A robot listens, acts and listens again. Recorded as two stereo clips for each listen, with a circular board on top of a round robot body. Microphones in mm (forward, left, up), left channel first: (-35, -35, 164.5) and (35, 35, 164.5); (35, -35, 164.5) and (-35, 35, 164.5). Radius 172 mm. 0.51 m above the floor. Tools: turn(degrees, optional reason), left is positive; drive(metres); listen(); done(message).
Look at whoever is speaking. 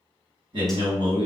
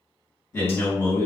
turn(degrees=15, reason="The man speaking: 15° left.")
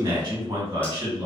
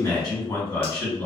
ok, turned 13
done("Facing the man speaking.")